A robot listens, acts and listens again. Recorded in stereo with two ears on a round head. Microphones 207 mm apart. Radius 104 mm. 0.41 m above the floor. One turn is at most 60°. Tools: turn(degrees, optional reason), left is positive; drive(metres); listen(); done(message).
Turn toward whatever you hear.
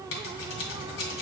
turn(degrees=60, reason="The scissors: about 60° left or 120° left.")
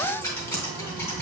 turn(degrees=15, reason="So it is at 15° left.")
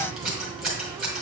done("Found it: scissors, straight ahead.")